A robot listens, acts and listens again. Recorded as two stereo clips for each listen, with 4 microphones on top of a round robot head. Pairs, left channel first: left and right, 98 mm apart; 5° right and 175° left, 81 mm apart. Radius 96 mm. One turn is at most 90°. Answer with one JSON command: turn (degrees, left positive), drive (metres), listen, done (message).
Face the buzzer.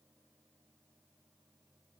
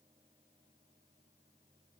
{"listen": true}
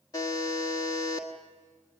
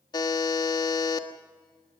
{"turn": 30}
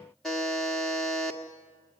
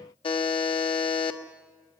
{"done": "Found it: a buzzer, straight ahead, 1 to 2 m away."}